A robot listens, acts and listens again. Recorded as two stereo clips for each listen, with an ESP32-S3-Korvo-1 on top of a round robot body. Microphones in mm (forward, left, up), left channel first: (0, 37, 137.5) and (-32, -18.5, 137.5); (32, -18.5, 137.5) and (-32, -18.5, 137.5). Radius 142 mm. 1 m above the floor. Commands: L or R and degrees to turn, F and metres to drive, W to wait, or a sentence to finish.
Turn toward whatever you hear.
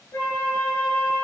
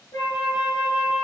L20
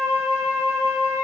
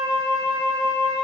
Found it: a flute, straight ahead.